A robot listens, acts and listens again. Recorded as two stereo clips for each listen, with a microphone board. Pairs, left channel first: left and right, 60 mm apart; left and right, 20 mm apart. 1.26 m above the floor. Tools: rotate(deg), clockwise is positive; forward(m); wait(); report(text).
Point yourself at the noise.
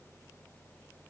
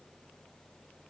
wait()
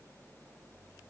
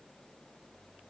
wait()
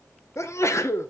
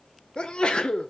rotate(-50)
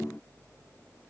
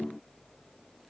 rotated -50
wait()
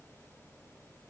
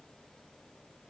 report("I heard a sneeze, but can't make it out now. It was about straight ahead or 80° left.")